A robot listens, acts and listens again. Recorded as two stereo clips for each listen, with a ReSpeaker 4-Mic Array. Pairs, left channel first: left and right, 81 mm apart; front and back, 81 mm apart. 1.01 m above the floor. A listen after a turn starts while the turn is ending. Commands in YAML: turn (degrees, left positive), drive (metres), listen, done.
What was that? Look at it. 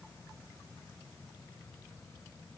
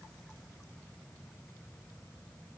listen: true
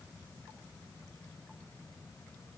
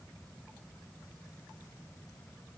listen: true
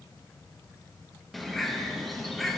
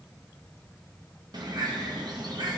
turn: 180
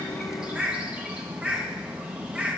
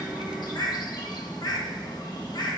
turn: -15
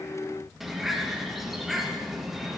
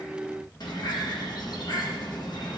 done: "Found it: a bird, straight ahead."